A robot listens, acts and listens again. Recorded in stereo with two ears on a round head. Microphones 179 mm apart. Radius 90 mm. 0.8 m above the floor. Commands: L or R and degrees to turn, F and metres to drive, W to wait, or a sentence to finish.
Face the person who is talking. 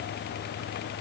W
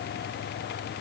W
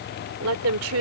R75
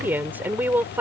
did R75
R10
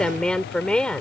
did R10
Found it: a woman speaking, straight ahead.